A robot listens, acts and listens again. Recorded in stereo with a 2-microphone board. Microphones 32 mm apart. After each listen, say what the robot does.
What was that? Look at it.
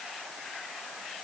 Keep listening.
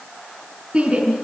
Turn 30° right.
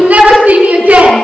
Turn 120° right.
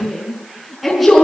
Found it: a shout, straight ahead, over 4 m away.